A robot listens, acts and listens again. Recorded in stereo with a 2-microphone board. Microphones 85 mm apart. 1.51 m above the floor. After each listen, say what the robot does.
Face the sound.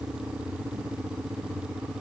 Keep listening.
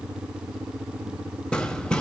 Turn 30° left.
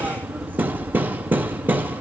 Turn 20° right.
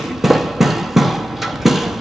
Found it: hammering, straight ahead.